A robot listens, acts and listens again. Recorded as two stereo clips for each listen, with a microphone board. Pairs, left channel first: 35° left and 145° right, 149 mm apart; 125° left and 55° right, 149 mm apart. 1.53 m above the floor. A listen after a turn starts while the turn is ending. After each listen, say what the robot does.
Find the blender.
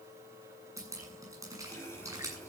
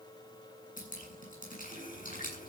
Keep listening.
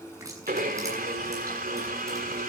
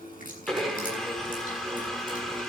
Turn 145° right.
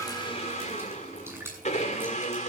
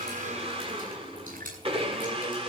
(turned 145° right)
Facing the blender.